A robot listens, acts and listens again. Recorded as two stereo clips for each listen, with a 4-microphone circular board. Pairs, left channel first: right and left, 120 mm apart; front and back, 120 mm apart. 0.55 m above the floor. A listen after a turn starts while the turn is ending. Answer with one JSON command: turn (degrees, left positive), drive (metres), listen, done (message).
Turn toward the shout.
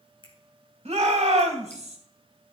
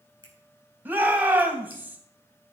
{"turn": 105}
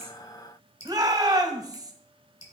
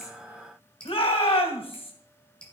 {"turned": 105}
{"turn": 35}
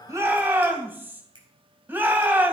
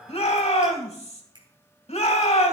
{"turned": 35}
{"turn": 15}
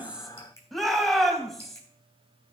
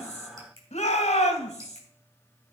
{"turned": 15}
{"done": "Found it: a shout, straight ahead."}